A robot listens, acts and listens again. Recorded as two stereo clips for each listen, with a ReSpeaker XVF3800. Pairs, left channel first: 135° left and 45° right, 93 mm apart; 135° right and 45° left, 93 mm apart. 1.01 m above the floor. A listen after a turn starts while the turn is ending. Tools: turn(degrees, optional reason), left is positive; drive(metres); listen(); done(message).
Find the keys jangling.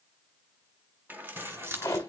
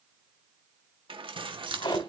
turn(degrees=20, reason="The keys jangling: 20° left.")
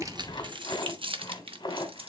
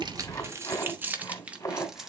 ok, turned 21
turn(degrees=-40, reason="The keys jangling is now 40° right.")
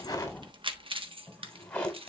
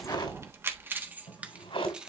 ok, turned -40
turn(degrees=-35, reason="The keys jangling is now 35° right.")
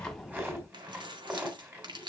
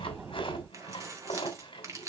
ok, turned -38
turn(degrees=-10, reason="The keys jangling is now 10° right.")
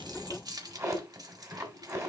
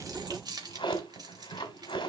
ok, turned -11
done("Facing the keys jangling.")